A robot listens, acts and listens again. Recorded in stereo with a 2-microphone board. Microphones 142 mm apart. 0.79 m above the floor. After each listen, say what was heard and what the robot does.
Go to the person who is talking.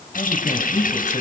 The man speaking: about 55° left or 125° left. Turn 55° left.
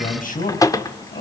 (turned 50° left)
So it is at 75° left. Turn 75° left.
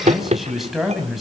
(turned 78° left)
Drive 1.0 m forward.
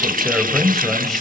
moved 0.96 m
Drive 1.0 m forward.
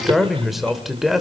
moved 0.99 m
Drive 1.0 m forward.
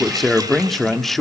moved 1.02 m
Drive 1.0 m forward.
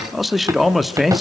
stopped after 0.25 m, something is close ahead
I am next to the man speaking.